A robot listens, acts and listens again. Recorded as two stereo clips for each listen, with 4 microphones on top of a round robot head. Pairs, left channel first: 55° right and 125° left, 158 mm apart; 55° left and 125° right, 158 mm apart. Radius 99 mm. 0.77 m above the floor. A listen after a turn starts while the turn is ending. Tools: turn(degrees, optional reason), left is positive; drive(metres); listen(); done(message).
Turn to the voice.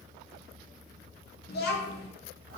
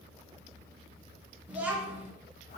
turn(degrees=-45, reason="The child speaking: 45° right.")
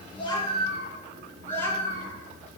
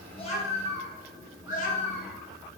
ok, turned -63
turn(degrees=20, reason="Nothing new. It was at 20° left.")
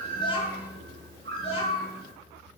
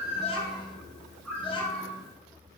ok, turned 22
listen()
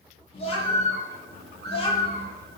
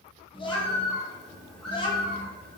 done("Facing the child speaking.")